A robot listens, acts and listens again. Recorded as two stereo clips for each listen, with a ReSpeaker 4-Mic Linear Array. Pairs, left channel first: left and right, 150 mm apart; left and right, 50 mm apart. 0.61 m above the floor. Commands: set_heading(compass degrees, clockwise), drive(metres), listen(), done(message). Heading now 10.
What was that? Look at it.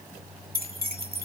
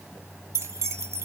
set_heading(100)
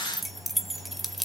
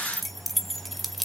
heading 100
done("Found it: keys jangling, straight ahead, 1 to 2 m away.")